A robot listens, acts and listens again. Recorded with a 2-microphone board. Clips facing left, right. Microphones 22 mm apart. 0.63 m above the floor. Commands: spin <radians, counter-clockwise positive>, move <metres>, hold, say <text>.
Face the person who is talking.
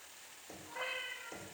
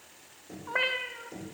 hold
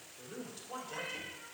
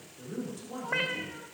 spin 0.35
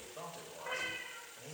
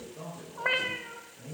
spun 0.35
spin 2.44
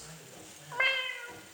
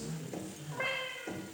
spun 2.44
spin 0.44
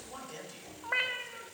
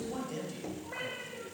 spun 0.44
say Found it: a man speaking, straight ahead.